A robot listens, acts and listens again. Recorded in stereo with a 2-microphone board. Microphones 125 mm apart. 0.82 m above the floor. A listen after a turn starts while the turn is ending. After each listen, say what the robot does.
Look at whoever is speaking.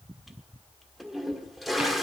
Keep listening.
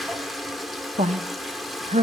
Turn 65° right.
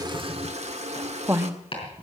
Turn 20° right.
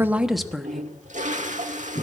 Facing the woman speaking, under 1 m away.